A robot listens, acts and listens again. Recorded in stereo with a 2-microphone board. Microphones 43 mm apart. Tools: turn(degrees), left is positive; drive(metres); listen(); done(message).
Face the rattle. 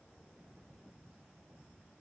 listen()
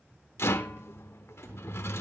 turn(degrees=90)
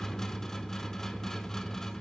turn(degrees=10)
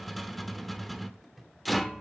done("Found it: a rattle, straight ahead.")